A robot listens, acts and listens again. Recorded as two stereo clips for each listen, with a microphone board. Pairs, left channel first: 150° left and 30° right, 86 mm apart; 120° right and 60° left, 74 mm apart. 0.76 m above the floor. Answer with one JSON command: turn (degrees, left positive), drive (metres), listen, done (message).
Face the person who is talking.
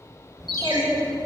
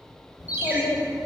{"turn": -120}
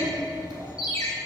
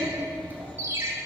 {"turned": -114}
{"done": "Facing the child speaking."}